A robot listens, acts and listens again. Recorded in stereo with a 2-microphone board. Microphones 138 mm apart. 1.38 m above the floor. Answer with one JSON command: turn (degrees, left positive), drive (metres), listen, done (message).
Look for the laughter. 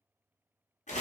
{"listen": true}
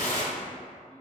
{"listen": true}
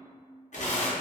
{"done": "I can't make out laughter to turn to."}